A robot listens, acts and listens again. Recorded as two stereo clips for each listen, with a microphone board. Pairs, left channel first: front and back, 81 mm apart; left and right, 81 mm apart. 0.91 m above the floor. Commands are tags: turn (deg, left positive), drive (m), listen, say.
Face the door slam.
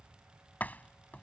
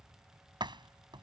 <turn deg="-70"/>
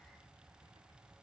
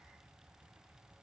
<say>Facing where the door slam came from. I can't hear it now.</say>